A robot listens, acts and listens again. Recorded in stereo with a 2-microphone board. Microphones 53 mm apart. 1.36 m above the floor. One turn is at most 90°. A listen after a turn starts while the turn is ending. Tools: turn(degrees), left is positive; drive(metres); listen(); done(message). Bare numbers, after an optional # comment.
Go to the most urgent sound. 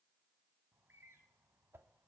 listen()
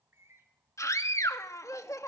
turn(90)
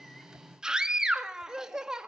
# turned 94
# So it is at 10° right.
turn(-10)
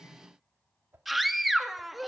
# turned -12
drive(1.0)
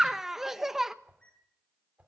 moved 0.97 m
drive(1.0)
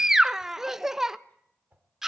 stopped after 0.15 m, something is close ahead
# The scream is now 10° right.
turn(-10)
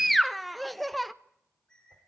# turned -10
done("Arrived at the scream, straight ahead.")